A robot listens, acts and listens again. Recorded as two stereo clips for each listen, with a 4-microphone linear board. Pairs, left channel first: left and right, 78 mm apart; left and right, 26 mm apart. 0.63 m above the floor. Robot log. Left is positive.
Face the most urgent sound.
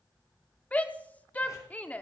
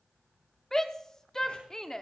note: The shout: about 20° left or 160° left.
cmd yaw +20
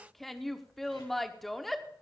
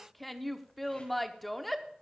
end: Found it: a shout, straight ahead.